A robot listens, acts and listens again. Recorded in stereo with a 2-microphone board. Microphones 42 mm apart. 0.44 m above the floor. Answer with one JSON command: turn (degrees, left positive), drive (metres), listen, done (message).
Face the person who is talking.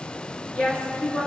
{"turn": 35}
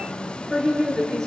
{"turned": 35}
{"turn": 10}
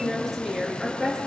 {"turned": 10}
{"done": "Facing the woman speaking."}